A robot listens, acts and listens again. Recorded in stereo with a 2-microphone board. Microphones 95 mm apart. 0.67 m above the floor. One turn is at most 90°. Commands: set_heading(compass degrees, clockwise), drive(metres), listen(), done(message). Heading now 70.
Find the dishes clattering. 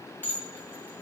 set_heading(50)
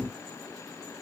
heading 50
listen()
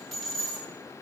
done("Found it: dishes clattering, straight ahead.")